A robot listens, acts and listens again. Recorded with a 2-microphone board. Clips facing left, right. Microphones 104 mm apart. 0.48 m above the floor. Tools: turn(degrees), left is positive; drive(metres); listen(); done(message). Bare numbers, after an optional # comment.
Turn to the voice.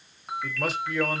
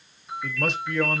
turn(30)
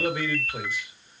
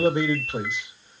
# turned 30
# So it is at 25° right.
turn(-25)
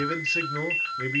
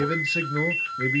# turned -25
done("Found it: a man speaking, straight ahead.")